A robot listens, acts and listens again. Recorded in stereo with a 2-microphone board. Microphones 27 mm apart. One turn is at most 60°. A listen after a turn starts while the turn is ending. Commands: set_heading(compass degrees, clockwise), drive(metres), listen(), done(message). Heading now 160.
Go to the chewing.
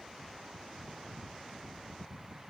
listen()
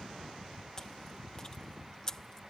set_heading(135)
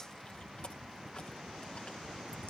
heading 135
listen()
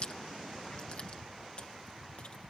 set_heading(75)
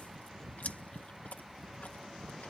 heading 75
set_heading(15)
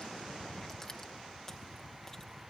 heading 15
set_heading(350)
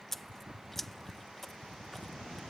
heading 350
set_heading(340)
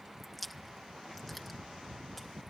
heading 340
drive(1.0)
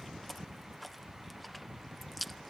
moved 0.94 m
drive(1.0)
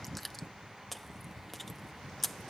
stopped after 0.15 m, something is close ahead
done("Arrived at the chewing, straight ahead.")